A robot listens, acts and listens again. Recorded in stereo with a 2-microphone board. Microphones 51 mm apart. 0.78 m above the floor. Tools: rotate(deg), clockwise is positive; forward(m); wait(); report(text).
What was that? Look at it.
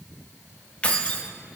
rotate(-25)
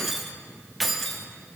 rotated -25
report("Found it: keys jangling, straight ahead.")